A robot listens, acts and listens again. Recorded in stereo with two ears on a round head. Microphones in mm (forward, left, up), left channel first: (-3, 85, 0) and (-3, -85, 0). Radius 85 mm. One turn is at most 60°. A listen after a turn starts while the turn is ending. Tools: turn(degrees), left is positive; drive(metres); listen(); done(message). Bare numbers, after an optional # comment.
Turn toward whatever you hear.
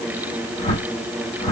# The whoosh: about 35° left or 145° left.
turn(35)
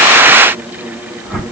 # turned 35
done("Found it: a whoosh, straight ahead, 1 to 2 m away.")